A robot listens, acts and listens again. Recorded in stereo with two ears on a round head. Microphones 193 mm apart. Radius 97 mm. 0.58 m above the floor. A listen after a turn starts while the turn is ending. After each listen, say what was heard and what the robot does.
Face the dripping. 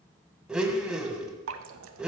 The dripping: about 65° right or 115° right. Turn 65° right.
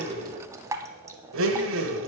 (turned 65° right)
So it is at 15° right. Turn 15° right.
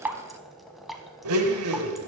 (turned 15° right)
Found it: dripping, straight ahead.